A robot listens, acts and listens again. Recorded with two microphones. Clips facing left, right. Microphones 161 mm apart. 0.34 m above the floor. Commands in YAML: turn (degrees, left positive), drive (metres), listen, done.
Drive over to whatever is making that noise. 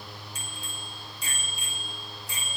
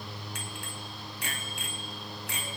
turn: -70
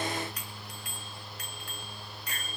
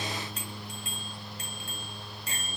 turn: -30
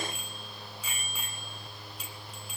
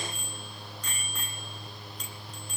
turn: 10
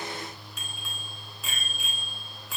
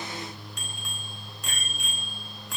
drive: 1.0
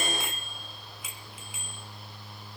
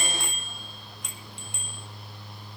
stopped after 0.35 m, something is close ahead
done: "Something is in my way. I am facing the bicycle bell but have not reached it."